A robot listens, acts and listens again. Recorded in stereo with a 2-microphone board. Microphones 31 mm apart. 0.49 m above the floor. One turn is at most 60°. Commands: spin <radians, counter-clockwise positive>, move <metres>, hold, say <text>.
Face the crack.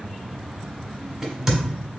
spin -0.35
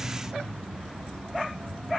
hold
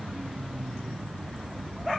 say I heard a crack, but can't make it out now. It was about straight ahead or 140° right.